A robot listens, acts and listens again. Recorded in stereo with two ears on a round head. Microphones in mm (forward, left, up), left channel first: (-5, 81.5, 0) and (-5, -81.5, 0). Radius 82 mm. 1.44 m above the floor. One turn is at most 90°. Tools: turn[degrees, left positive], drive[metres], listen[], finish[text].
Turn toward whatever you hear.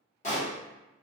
Thought: The pop: about 40° left or 140° left.
Action: turn[40]
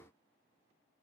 Action: listen[]
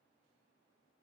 Action: finish[I heard a pop, but can't make it out now. It was about straight ahead or 100° left.]